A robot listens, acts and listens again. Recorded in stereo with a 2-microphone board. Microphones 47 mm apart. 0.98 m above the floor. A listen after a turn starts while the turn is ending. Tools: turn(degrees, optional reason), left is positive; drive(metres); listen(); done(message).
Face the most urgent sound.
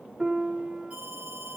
turn(degrees=-30, reason="The alarm: about 30° right or 150° right.")
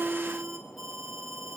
done("Found it: an alarm, straight ahead.")